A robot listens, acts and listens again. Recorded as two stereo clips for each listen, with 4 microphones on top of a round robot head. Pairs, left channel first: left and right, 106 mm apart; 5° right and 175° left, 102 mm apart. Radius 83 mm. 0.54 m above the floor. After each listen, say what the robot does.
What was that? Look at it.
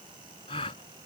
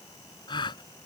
Turn 35° left.
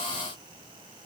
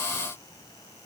Facing where the gasp came from. I can't hear it now.